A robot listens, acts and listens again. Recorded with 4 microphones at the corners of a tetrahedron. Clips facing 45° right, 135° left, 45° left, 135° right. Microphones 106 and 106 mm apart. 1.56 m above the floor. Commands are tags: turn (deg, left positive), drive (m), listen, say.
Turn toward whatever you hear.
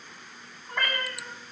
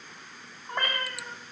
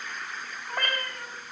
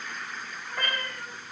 <turn deg="80"/>
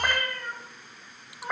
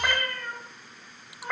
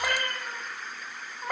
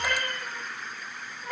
<turn deg="30"/>
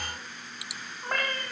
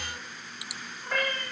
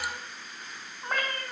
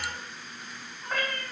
<say>Found it: a cat meowing, straight ahead, over 4 m away.</say>